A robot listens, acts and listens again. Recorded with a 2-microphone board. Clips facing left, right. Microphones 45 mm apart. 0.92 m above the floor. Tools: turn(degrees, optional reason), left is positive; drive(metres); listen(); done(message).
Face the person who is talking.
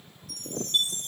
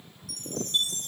listen()
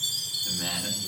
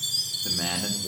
turn(degrees=-65, reason="The man speaking: about 65° right or 115° right.")
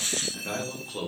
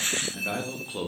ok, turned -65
turn(degrees=-10, reason="So it is at 10° right.")
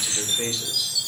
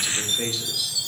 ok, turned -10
done("Found it: a man speaking, straight ahead, 1 to 2 m away.")